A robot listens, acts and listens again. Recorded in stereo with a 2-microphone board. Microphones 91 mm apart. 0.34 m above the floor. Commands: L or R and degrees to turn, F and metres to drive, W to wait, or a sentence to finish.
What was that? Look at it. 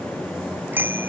R20
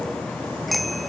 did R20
Facing the bicycle bell.